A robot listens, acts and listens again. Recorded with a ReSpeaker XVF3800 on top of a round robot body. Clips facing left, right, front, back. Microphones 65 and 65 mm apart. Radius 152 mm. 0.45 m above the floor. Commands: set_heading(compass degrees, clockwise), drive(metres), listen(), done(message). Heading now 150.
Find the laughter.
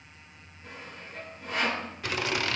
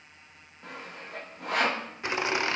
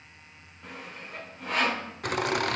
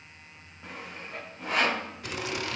set_heading(175)
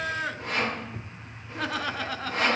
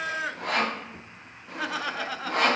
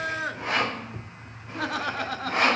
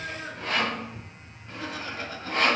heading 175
done("Facing the laughter.")